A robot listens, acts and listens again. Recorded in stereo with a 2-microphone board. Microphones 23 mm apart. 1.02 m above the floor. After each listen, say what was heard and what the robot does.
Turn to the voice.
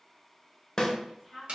Turn 30° right.
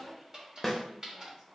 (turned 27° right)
So it is at 140° right. Turn 140° right.
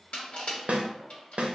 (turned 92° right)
Nothing new. It was at 50° right. Turn 50° right.
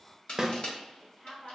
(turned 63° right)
The woman speaking is now 15° left. Turn 15° left.
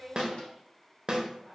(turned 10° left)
Found it: a woman speaking, straight ahead, 1 to 2 m away.